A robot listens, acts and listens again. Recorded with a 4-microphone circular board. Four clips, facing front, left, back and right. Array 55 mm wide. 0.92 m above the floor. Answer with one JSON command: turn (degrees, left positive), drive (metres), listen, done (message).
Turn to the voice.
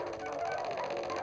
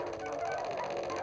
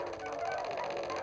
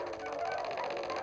{"listen": true}
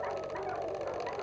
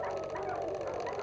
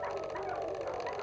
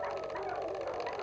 {"listen": true}
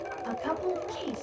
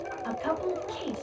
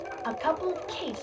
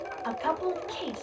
{"turn": -150}
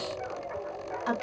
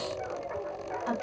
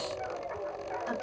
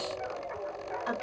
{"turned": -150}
{"turn": -15}
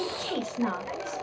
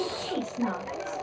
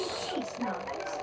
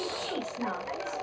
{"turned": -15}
{"done": "Found it: a woman speaking, straight ahead."}